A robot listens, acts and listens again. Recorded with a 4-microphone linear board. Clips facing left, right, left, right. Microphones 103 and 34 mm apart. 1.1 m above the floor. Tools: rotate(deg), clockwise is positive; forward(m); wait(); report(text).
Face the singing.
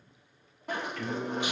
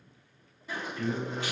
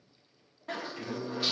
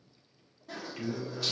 rotate(20)
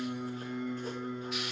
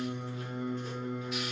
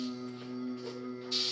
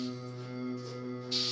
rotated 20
rotate(125)
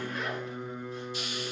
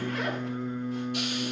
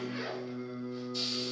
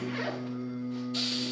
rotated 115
rotate(-15)
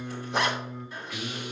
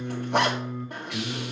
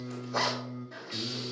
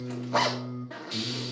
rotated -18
rotate(-15)
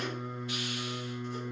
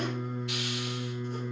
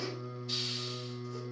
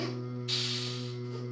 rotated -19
report("Facing the singing.")